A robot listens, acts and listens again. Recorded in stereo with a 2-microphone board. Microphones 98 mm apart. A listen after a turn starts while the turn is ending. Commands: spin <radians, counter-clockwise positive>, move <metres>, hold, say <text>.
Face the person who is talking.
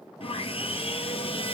hold
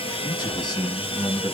spin 0.87
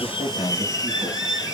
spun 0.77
hold
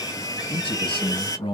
spin 1.40
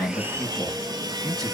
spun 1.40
say Found it: a man speaking, straight ahead.